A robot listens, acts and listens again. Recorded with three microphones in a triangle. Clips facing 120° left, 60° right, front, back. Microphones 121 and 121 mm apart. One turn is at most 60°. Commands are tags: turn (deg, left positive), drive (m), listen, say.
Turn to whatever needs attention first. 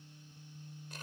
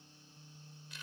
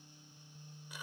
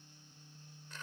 <listen/>
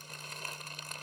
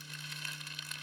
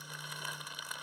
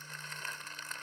<listen/>
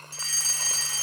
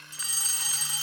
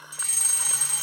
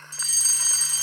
<say>Facing the fire alarm.</say>